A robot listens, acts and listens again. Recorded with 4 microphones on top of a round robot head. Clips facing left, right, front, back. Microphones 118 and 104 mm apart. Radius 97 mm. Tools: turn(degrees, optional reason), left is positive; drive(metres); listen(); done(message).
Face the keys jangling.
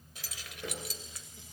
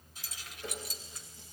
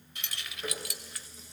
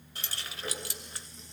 turn(degrees=120, reason="The keys jangling: 120° left.")
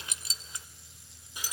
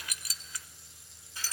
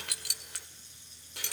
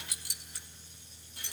turn(degrees=10, reason="The keys jangling is now 10° left.")
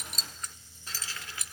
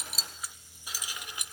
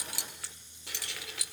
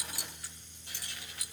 turn(degrees=-20, reason="The keys jangling is now 20° right.")
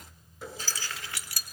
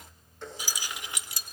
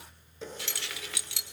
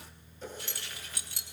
turn(degrees=-20, reason="The keys jangling is now 20° right.")
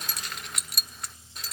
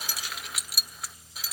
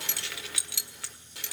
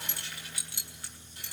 done("Facing the keys jangling.")